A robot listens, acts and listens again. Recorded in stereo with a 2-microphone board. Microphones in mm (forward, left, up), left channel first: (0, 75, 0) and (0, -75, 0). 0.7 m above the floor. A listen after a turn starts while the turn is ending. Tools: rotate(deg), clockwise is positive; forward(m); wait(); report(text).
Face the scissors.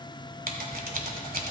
rotate(90)
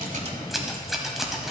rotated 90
report("Found it: scissors, straight ahead, 1 to 2 m away.")